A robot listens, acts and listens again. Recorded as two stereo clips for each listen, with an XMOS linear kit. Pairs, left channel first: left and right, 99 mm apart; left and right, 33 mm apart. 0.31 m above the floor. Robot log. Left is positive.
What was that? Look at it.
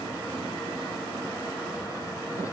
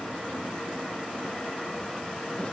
cmd idle
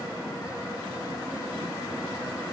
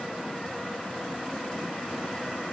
cmd idle
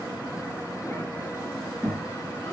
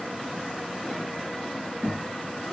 note: The child speaking: about 20° left or 160° left.
cmd yaw +20
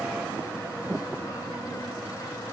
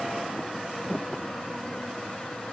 cmd idle
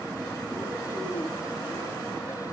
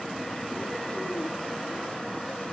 cmd idle
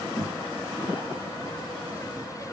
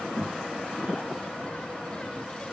note: So it is at 140° left.
cmd yaw +140
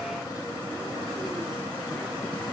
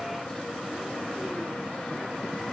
cmd idle
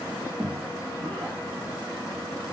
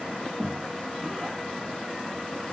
note: The child speaking is now 15° left.
cmd yaw +15
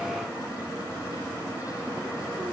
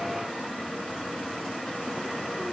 cmd idle
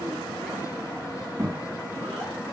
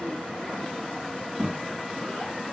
end: Found it: a child speaking, straight ahead.